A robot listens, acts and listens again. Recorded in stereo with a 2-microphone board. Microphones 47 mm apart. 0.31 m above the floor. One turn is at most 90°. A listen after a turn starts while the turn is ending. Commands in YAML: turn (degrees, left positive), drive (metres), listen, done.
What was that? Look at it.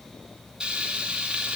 turn: -20
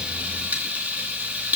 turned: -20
turn: -90
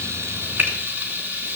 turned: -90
turn: -55
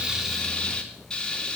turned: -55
turn: 20
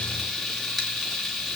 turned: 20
done: "Found it: frying, straight ahead."